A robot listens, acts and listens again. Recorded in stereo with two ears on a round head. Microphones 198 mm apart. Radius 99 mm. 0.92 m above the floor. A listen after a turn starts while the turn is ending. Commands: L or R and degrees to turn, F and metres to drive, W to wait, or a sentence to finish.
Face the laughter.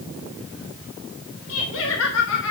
L65
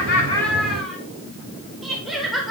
Facing the laughter.